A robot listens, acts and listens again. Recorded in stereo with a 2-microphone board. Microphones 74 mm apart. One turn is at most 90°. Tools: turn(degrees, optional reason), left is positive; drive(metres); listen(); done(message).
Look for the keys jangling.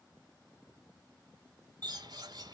listen()
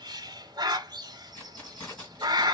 turn(degrees=20, reason="The keys jangling: about 20° left or 160° left.")
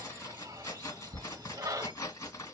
turn(degrees=90, reason="So it is at 135° left.")
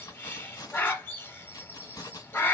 turn(degrees=60, reason="The keys jangling is now 60° left.")
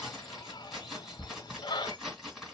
done("Facing the keys jangling, 1 to 2 m away.")